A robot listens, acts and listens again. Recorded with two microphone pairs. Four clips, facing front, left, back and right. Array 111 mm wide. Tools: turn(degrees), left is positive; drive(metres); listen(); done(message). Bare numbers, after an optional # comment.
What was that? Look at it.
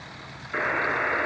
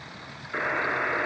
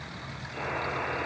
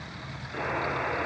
# The buzzer: 30° left.
turn(30)
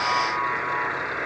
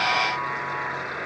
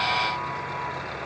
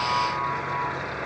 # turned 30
# The buzzer is now 10° left.
turn(10)
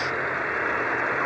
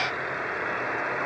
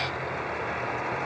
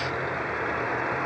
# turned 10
done("Facing the buzzer.")